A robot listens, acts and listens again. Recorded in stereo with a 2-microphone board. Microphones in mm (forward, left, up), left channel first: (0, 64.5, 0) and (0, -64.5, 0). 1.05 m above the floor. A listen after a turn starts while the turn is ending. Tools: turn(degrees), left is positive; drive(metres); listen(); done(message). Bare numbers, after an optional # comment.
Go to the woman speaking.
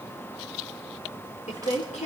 # The woman speaking: about 70° left or 110° left.
turn(70)
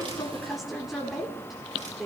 drive(1.0)
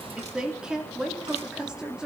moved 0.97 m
drive(1.0)
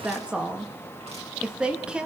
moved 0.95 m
# The woman speaking is now 10° right.
turn(-10)
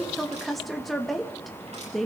drive(1.0)
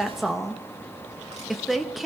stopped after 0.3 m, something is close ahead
done("I am next to the woman speaking.")